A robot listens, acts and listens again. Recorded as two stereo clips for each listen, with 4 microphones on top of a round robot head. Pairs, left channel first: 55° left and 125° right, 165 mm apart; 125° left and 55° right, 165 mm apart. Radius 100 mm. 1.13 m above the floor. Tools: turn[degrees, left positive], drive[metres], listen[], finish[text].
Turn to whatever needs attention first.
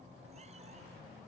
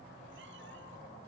Action: listen[]
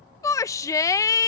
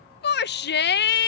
Thought: The shout: 125° left.
Action: turn[125]
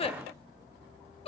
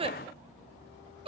Action: finish[Found it: a shout, straight ahead.]